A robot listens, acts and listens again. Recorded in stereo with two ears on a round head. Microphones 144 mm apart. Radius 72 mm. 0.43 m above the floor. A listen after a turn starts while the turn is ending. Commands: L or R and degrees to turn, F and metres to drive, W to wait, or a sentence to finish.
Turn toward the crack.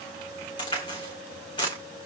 L30
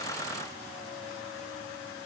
W
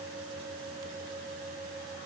I heard a crack, but can't make it out now. It was about straight ahead or 120° left.